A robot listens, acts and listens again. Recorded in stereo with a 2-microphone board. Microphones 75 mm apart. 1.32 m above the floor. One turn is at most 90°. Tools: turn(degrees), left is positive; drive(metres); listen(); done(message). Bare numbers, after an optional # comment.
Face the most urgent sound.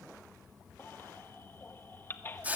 # The baby crying: about 30° left or 150° left.
turn(30)
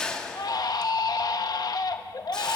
# So it is at 120° left.
turn(90)
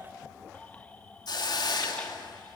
# Nothing new. It was at 30° left.
turn(30)
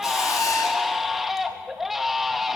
done("Found it: a baby crying, straight ahead.")